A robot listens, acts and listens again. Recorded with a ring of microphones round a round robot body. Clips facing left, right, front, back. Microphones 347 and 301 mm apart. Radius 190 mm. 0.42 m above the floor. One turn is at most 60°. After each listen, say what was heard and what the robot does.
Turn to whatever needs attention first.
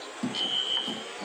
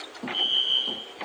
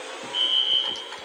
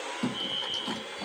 The fire alarm: 20° right. Turn 20° right.
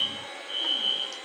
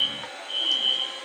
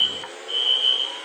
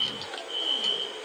Facing the fire alarm.